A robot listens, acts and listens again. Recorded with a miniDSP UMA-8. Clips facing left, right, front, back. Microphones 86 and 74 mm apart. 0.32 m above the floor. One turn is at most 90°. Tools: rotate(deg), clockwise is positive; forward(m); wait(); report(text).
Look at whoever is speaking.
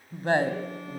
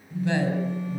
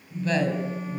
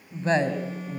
rotate(-90)
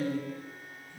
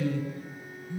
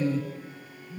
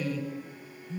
rotate(-50)
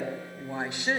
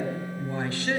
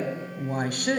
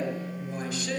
rotate(-20)
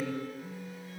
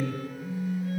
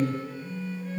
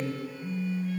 report("Facing the woman speaking, 2 to 4 m away.")